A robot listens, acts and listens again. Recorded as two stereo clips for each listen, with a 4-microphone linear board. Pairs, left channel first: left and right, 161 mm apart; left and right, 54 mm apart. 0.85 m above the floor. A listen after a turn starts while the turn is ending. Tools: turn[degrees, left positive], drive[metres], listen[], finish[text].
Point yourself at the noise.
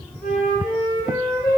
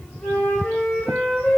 Thought: The flute: about 70° left or 110° left.
Action: turn[70]
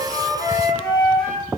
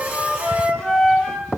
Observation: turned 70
Action: finish[Found it: a flute, straight ahead.]